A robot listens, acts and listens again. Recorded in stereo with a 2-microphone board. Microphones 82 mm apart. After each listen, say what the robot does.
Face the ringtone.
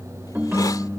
Turn 20° right.
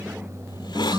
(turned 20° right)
Turn 140° right.
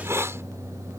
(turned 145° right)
Keep listening.
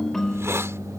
Found it: a ringtone, straight ahead.